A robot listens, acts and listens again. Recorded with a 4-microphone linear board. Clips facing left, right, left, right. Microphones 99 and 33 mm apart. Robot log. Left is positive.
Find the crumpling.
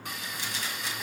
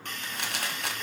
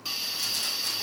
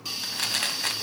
note: The crumpling: about 65° right or 115° right.
cmd yaw -65
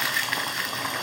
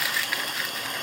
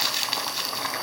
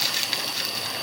end: Found it: crumpling, straight ahead, 1 to 2 m away.